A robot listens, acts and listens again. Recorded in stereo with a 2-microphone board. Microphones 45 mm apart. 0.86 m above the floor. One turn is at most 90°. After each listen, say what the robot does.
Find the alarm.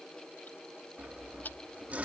Keep listening.
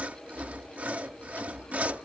Keep listening.
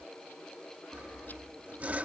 I can't make out an alarm, only sawing.